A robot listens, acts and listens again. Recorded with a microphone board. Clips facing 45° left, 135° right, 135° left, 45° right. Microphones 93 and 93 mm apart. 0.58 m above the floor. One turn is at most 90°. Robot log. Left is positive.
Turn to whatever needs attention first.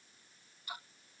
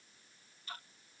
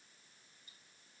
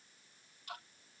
cmd idle
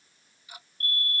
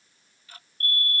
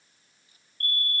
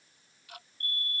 note: The fire alarm: 115° left.
cmd yaw +90
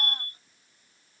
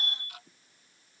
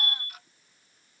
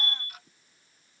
note: The fire alarm is now 15° left.
cmd yaw +15
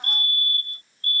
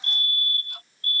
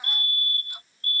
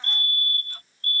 end: Facing the fire alarm.